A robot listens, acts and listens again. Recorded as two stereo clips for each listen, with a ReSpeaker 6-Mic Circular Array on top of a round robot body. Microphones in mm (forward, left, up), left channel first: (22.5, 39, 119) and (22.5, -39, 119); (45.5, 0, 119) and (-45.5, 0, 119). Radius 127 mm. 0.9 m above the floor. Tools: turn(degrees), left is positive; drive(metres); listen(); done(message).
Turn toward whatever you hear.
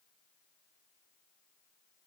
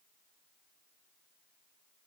listen()
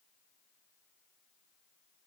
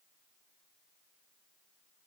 listen()
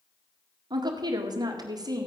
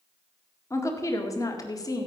turn(degrees=-50)
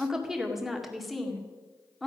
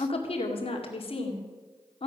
done("Facing the woman speaking, 2 to 4 m away.")